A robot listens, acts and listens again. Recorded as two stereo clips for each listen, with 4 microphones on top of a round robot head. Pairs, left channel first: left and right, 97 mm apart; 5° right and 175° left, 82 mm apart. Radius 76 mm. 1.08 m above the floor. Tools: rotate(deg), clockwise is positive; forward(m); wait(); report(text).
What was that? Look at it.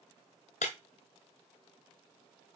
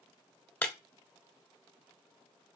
rotate(-65)
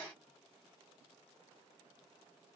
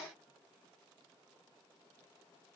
report("I heard breaking glass from this way, but can't make it out now.")